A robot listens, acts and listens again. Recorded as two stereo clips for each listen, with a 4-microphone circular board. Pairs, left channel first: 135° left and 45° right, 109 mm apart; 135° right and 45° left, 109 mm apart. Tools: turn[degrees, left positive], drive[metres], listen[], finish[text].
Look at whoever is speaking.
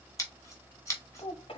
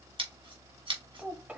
Thought: The child speaking: 120° left.
Action: turn[120]
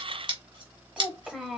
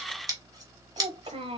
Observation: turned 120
Thought: The child speaking is now 35° left.
Action: turn[35]
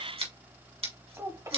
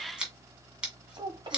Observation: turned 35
Thought: The child speaking is now 10° left.
Action: turn[10]
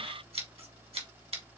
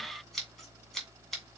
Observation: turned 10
Action: listen[]
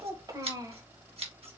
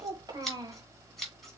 Action: finish[Found it: a child speaking, straight ahead.]